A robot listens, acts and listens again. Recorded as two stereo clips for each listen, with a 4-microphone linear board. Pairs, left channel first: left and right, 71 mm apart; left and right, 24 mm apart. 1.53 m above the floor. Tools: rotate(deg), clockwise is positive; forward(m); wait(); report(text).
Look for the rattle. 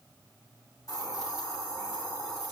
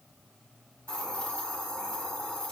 wait()
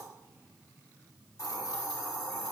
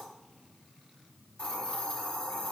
wait()
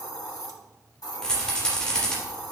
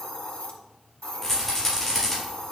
rotate(-30)
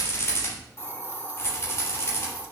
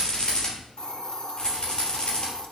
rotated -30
rotate(-140)
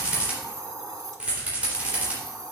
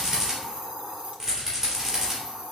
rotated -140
rotate(20)
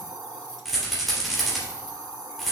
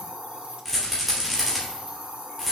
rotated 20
report("Found it: a rattle, straight ahead.")